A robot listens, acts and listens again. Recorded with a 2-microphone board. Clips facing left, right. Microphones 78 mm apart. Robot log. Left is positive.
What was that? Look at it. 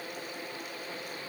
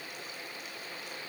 cmd idle
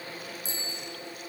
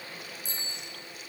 note: The bicycle bell: about 55° right or 125° right.
cmd yaw -55
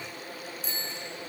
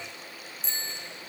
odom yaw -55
end: Found it: a bicycle bell, straight ahead, over 4 m away.